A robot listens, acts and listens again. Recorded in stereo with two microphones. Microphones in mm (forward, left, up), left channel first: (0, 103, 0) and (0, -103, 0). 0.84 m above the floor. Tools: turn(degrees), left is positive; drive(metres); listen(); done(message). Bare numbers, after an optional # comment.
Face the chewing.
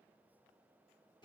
listen()
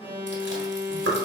# The chewing: about 65° right or 115° right.
turn(-65)
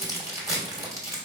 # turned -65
# So it is at 15° right.
turn(-15)
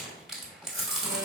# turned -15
done("Facing the chewing, 1 to 2 m away.")